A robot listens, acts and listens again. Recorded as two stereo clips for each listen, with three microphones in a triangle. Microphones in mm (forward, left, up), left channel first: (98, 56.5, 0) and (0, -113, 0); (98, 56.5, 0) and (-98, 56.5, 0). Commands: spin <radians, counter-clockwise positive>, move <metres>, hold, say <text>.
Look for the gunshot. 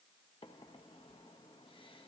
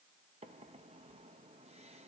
hold
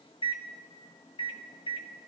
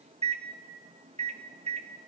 hold
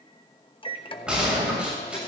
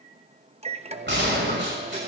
spin 2.71
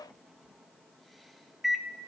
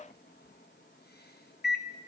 say I heard a gunshot from this way, but can't make it out now.